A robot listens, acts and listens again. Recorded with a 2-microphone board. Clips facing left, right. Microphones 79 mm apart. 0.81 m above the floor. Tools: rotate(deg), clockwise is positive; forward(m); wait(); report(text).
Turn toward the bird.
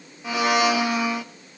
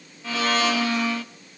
wait()
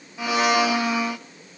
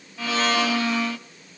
wait()
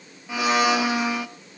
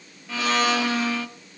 report("I can't make out a bird to turn to.")